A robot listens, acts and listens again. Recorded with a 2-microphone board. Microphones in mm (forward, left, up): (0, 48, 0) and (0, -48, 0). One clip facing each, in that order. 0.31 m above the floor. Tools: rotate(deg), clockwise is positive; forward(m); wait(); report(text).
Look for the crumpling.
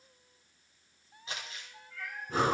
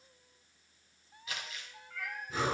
rotate(-30)
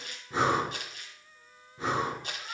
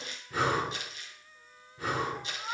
rotate(-115)
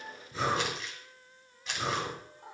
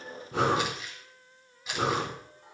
report("Facing the crumpling, 2 to 4 m away.")